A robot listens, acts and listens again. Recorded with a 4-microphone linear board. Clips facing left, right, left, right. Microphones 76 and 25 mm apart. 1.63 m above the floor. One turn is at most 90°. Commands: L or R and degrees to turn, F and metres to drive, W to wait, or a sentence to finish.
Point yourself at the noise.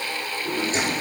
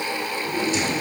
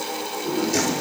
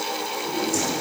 L40
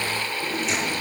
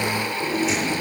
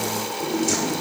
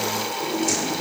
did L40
Facing the drawer.